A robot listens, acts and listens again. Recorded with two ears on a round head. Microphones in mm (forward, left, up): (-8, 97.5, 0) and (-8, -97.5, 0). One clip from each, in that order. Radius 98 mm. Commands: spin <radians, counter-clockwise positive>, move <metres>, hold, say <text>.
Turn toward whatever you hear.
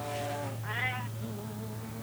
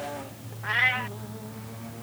spin -0.87
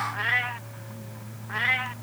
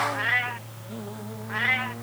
say Facing the cat meowing.